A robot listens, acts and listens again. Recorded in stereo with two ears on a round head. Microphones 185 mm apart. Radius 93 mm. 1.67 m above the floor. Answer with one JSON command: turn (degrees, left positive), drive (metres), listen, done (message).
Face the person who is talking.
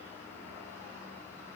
{"listen": true}
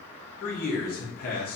{"turn": 45}
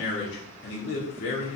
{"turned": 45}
{"turn": 80}
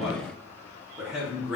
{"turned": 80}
{"done": "Facing the man speaking, 1 to 2 m away."}